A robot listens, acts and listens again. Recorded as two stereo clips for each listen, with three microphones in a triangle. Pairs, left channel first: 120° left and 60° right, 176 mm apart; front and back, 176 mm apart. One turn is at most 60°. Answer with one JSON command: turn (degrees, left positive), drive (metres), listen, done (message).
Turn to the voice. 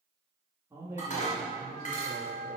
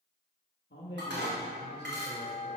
{"turn": 15}
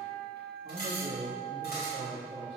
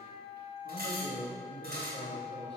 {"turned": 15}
{"done": "Found it: a man speaking, straight ahead, 1 to 2 m away."}